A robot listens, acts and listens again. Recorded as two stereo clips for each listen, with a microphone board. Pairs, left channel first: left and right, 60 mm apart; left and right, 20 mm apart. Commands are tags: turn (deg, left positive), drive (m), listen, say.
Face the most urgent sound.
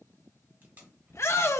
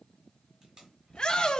<turn deg="45"/>
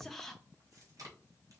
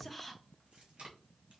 <listen/>
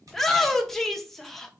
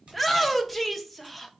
<say>Found it: a shout, straight ahead.</say>